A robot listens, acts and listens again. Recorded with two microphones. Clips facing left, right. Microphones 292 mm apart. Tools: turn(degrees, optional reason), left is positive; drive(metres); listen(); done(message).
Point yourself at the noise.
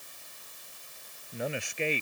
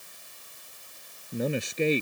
turn(degrees=-45, reason="The man speaking: about 45° right or 135° right.")
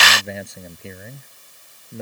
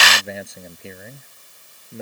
done("Facing the man speaking.")